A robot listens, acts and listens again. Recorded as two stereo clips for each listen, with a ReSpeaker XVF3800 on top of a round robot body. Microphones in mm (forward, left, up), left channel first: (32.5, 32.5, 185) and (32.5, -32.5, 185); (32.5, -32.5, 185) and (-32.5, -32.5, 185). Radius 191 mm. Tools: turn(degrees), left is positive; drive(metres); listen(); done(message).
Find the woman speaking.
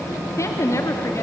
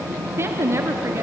turn(degrees=130)
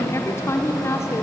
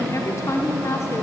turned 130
turn(degrees=45)
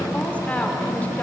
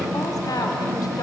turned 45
listen()
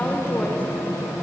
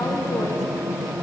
listen()
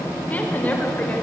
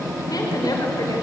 turn(degrees=25)
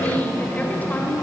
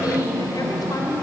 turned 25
listen()
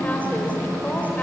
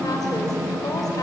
turn(degrees=25)
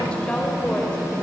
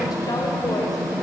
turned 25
listen()
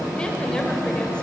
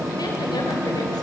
listen()
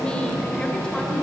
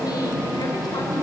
done("Facing where the woman speaking came from. I can't hear it now.")